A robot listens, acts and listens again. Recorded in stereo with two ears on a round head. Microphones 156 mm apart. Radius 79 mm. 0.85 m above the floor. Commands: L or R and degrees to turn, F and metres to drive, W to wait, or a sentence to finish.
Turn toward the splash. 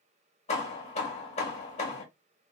W
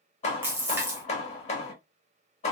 R30
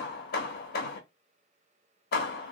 W
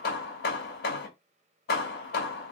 I heard a splash, but can't make it out now. It was about 15° left or 135° right.